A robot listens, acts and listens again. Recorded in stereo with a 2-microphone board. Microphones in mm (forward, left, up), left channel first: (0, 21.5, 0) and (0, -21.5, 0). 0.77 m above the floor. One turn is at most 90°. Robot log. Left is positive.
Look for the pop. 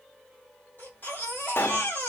note: The pop: about 65° left or 115° left.
cmd yaw +65
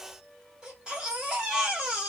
cmd idle
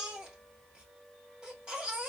end: I heard a pop, but can't make it out now. It was about straight ahead or 50° left.